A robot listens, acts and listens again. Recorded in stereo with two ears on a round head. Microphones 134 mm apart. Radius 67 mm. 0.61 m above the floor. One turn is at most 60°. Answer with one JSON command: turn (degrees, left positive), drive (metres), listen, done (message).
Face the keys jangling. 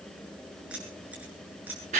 {"turn": -30}
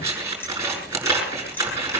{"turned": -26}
{"listen": true}
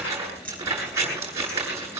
{"turn": 10}
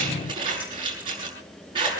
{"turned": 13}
{"listen": true}
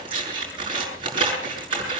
{"listen": true}
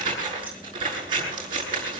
{"done": "Facing where the keys jangling came from. I can't hear it now."}